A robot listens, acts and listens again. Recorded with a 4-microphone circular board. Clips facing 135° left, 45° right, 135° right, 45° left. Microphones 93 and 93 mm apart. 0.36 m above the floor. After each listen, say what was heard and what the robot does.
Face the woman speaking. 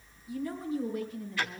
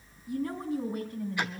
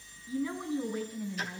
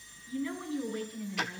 The woman speaking: 60° right. Turn 60° right.
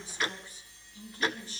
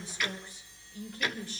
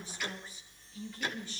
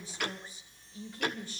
Facing the woman speaking.